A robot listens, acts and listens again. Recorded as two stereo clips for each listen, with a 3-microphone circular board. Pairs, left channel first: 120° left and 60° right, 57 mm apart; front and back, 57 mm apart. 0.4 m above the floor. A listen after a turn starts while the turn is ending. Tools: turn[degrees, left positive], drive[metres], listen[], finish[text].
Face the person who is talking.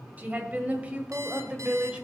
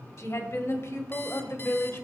Action: finish[Facing the woman speaking, 1 to 2 m away.]